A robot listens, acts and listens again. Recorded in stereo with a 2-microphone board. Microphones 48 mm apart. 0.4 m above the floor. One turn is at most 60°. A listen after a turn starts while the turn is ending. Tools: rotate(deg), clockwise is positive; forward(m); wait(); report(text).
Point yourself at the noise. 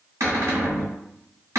rotate(60)
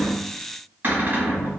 rotate(40)
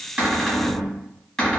rotate(-10)
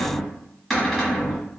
report("Facing the cupboard door.")